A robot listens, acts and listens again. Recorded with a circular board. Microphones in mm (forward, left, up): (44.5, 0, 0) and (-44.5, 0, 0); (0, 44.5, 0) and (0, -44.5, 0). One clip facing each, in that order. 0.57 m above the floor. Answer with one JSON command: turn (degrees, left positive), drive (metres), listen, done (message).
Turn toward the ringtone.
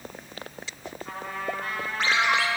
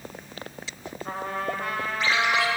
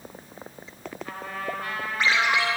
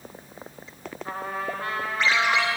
{"turn": 15}
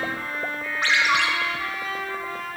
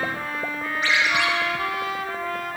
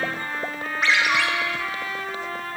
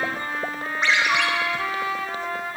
{"done": "Found it: a ringtone, straight ahead."}